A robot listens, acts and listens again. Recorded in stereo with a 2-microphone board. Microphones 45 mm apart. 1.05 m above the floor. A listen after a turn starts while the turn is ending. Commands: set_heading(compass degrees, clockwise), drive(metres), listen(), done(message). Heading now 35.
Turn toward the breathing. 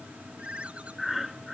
set_heading(65)
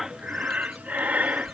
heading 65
set_heading(205)
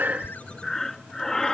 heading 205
set_heading(195)
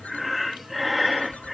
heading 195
done("Found it: breathing, straight ahead.")